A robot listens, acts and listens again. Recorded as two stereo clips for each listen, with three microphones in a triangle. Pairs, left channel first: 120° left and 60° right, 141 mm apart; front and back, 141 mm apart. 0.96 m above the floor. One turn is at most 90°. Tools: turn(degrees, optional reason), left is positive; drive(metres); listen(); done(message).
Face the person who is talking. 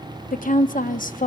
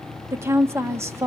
turn(degrees=90, reason="The woman speaking: 110° left.")
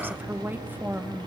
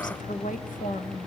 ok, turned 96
turn(degrees=15, reason="The woman speaking is now 15° left.")
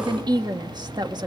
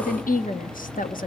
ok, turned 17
done("Facing the woman speaking.")